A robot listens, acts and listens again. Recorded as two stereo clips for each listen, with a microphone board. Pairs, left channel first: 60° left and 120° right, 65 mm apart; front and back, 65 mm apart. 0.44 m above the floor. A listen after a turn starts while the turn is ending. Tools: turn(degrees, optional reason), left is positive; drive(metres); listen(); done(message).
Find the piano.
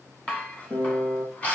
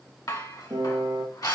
turn(degrees=120, reason="The piano: 120° left.")
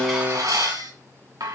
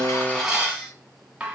turn(degrees=25, reason="The piano is now 25° left.")
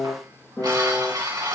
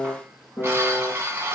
done("Facing the piano, over 4 m away.")